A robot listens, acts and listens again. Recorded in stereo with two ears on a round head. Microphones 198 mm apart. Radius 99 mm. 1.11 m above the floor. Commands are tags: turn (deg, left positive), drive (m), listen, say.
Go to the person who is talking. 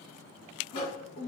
<turn deg="40"/>
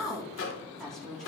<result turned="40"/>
<drive m="1.0"/>
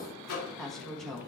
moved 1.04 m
<drive m="1.0"/>
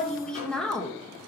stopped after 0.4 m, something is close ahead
<say>I am next to the woman speaking.</say>